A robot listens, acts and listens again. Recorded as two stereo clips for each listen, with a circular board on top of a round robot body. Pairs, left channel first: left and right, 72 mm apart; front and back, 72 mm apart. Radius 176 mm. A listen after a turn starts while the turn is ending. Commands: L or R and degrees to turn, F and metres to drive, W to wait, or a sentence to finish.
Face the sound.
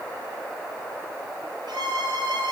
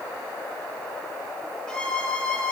R80
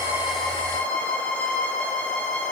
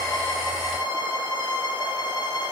L15
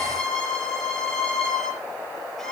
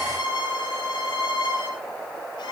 Found it: a violin, straight ahead.